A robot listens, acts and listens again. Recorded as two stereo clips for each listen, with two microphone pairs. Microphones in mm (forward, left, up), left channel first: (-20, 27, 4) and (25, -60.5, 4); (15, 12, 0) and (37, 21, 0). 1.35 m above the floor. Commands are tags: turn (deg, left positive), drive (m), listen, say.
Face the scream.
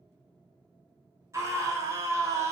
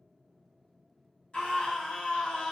<turn deg="-120"/>
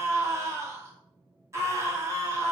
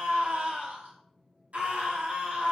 <say>Found it: a scream, straight ahead.</say>